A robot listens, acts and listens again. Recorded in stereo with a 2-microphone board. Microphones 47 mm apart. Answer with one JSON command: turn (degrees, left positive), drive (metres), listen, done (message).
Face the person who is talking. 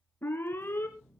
{"listen": true}
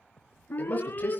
{"turn": 35}
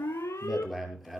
{"done": "Facing the man speaking, over 4 m away."}